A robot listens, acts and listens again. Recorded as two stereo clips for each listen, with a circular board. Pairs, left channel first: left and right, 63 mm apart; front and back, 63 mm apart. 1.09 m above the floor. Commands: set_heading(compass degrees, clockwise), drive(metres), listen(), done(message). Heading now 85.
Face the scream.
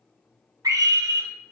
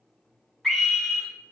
set_heading(170)
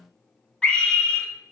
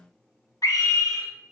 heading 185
set_heading(170)
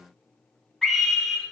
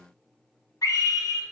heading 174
done("Facing the scream.")